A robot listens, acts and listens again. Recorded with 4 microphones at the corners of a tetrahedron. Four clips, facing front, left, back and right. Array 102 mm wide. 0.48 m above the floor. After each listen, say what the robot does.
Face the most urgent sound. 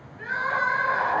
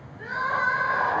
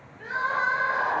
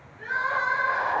Turn 15° left.
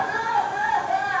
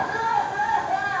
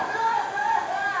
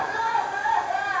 Facing the crying, 1 to 2 m away.